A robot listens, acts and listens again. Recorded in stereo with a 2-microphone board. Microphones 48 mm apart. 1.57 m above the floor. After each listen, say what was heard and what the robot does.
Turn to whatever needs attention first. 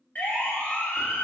The siren: about 40° left or 140° left. Turn 40° left.
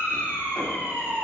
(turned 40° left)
So it is at 105° left. Turn 105° left.
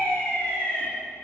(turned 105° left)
The siren is now 25° left. Turn 25° left.
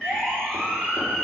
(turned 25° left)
The siren is now 10° left. Turn 10° left.
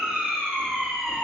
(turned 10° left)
Facing the siren.